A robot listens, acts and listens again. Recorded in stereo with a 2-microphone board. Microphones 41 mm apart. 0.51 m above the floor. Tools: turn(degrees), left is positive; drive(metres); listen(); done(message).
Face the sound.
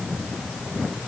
listen()
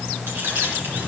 turn(degrees=-90)
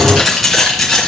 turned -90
turn(degrees=10)
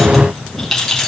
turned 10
turn(degrees=10)
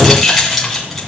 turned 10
done("Facing the keys jangling.")